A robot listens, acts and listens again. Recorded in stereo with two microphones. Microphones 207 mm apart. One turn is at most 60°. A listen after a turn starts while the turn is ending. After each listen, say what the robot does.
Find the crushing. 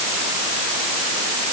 Keep listening.
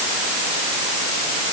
Keep listening.
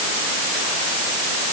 I can't make out crushing.